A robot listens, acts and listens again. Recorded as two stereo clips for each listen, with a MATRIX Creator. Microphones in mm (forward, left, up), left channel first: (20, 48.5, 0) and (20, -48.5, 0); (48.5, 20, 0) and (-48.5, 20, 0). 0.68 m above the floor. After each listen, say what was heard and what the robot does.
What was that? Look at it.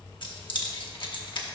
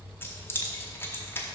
The keys jangling: 65° left. Turn 65° left.
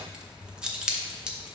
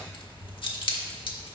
The keys jangling is now 10° right. Turn 10° right.
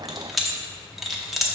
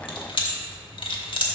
Facing the keys jangling, under 1 m away.